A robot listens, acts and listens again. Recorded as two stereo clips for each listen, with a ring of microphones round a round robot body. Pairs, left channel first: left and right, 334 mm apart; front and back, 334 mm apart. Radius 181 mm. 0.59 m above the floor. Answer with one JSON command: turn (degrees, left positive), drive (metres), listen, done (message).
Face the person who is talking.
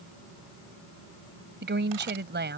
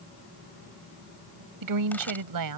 {"turn": -150}
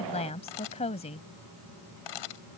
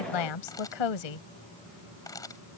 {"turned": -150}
{"turn": 15}
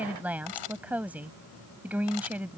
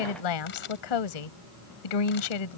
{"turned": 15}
{"done": "Found it: a woman speaking, straight ahead."}